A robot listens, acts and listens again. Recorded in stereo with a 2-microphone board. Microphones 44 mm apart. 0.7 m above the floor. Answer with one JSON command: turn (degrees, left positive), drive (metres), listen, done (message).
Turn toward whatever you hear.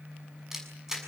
{"turn": -30}
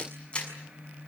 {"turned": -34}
{"turn": 25}
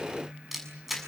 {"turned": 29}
{"done": "Found it: a camera shutter, straight ahead, over 4 m away."}